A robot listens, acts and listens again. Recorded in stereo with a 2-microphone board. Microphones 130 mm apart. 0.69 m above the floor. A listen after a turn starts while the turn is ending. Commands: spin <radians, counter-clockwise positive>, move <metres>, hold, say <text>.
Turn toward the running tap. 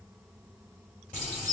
spin 1.57
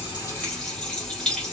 say Found it: a running tap, straight ahead, 2 to 4 m away.